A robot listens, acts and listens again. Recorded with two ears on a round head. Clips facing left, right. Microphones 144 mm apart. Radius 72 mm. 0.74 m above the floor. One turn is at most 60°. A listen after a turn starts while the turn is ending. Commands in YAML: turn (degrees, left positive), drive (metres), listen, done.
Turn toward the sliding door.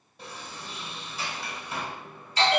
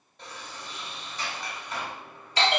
turn: 30
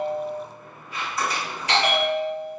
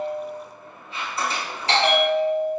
turn: -25
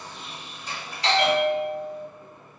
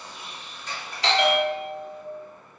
turn: 10
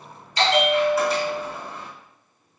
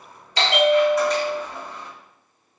done: "Found it: a sliding door, straight ahead."